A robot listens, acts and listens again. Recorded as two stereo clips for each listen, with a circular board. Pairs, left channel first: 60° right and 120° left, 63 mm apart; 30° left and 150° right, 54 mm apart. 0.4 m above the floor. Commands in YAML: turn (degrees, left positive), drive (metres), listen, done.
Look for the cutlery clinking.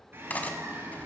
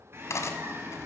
done: "Facing the cutlery clinking."